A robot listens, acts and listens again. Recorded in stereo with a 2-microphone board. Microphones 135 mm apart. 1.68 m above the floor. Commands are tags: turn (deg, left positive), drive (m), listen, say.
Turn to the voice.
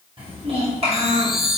<turn deg="-50"/>
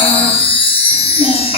<turn deg="-30"/>
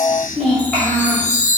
<say>Facing the child speaking.</say>